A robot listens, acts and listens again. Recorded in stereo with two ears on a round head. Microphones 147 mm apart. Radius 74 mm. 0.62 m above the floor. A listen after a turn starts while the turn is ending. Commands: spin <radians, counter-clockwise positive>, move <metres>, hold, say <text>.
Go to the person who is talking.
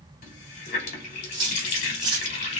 hold
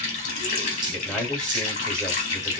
spin 0.52
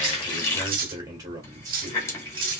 spin -0.44
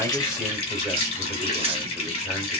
move 1.0
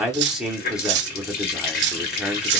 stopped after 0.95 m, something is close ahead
say I am next to the man speaking.